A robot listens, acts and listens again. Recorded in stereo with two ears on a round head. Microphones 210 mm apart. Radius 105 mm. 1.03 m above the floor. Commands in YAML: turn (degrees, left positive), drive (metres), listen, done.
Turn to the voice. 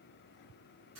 listen: true
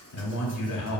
turn: 70
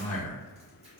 turn: 35
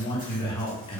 turn: 25
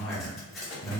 done: "Found it: a man speaking, straight ahead."